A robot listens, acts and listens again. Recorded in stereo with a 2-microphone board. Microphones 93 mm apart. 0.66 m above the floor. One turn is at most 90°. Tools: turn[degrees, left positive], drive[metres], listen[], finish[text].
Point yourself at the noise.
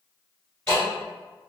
Action: turn[30]
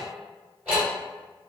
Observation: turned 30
Thought: So it is at 20° right.
Action: turn[-20]
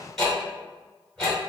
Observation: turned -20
Action: finish[Facing the ticking, 1 to 2 m away.]